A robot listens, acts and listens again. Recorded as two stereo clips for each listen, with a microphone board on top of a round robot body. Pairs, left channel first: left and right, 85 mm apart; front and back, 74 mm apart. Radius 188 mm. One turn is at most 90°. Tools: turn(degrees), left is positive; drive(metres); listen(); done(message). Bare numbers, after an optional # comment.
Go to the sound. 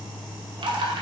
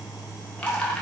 # The dripping: 75° right.
turn(-75)
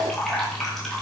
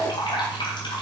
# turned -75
drive(1.0)
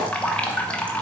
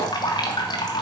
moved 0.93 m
# The dripping is now 15° left.
turn(15)
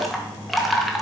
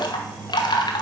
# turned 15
drive(1.0)
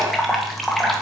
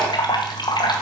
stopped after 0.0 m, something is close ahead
done("I am next to the dripping.")